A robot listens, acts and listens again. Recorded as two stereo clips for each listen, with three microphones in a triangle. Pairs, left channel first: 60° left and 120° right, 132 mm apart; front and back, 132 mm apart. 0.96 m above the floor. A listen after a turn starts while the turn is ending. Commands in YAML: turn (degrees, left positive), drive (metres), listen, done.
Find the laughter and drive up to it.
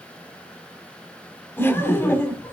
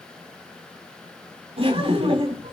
turn: 135
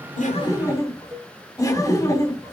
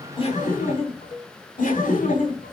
drive: 1.0
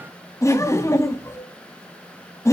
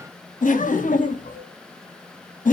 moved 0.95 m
turn: -10
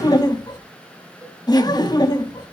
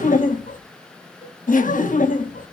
drive: 1.0
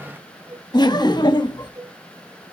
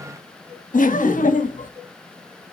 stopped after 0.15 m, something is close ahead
done: "I am next to the laughter."